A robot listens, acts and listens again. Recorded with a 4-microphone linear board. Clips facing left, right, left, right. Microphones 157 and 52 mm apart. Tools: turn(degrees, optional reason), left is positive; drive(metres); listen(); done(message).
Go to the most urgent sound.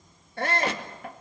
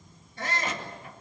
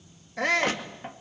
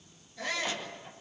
turn(degrees=65, reason="The shout: about 65° left or 115° left.")
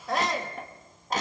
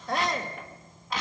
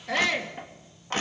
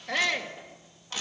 drive(metres=1.0)
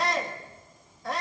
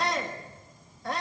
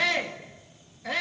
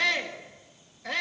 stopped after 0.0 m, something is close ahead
done("Blocked. The shout is further on, straight ahead.")